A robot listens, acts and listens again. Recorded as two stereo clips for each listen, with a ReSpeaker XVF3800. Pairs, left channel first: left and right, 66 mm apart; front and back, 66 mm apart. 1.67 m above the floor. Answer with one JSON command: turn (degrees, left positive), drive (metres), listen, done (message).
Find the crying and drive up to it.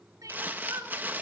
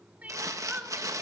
{"turn": -115}
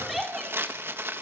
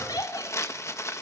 {"drive": 1.0}
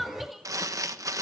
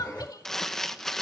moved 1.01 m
{"drive": 1.0}
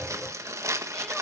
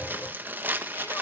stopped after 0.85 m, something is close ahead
{"listen": true}
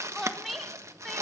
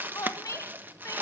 {"done": "I am next to the crying."}